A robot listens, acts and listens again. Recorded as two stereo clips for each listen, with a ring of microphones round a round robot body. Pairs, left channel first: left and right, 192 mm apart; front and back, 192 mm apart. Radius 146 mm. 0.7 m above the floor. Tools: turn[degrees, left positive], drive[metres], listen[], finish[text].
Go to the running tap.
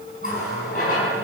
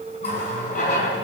Thought: The running tap: 50° left.
Action: turn[50]
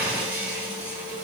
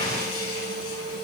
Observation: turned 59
Thought: The running tap is now 10° right.
Action: turn[-10]
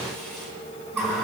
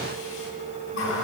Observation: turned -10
Action: drive[1.0]
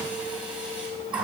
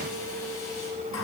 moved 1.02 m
Thought: The running tap is now 10° right.
Action: turn[-10]
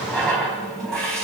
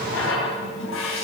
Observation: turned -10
Action: drive[1.0]
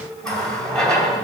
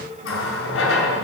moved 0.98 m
Action: drive[1.0]
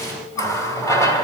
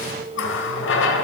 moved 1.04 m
Thought: The running tap is now 15° left.
Action: turn[15]
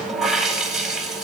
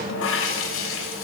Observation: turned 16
Action: drive[1.0]
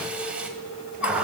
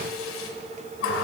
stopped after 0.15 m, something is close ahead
Action: finish[Arrived at the running tap, straight ahead.]